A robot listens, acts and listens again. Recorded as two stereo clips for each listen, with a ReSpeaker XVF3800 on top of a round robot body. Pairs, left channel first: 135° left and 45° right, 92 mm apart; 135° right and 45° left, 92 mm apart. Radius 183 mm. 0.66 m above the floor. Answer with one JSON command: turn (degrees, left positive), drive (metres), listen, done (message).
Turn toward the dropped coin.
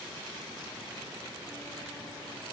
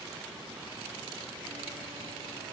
{"listen": true}
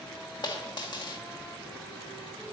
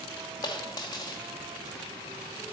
{"turn": 175}
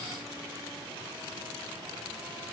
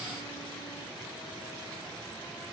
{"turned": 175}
{"done": "I heard a dropped coin from this way, but can't make it out now."}